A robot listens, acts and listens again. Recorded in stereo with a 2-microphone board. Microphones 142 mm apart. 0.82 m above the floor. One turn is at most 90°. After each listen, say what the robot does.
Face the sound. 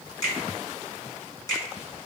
Turn 25° left.
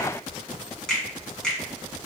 Facing the finger snap.